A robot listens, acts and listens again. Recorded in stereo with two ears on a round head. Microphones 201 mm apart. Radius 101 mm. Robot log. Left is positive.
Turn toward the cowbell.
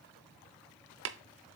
cmd idle
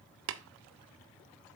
cmd idle
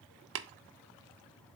end: I can't make out a cowbell to turn to.